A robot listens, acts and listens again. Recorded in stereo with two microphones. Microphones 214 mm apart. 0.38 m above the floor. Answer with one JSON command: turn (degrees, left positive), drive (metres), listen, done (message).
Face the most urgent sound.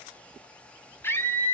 {"turn": 30}
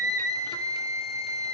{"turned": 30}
{"turn": -20}
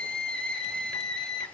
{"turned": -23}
{"done": "Facing the scream, 2 to 4 m away."}